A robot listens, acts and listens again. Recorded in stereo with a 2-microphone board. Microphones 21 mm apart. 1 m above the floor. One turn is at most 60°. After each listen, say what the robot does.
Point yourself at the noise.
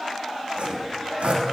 Turn 60° right.
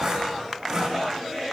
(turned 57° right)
Turn 35° right.
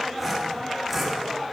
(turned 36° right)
Found it: sawing, straight ahead.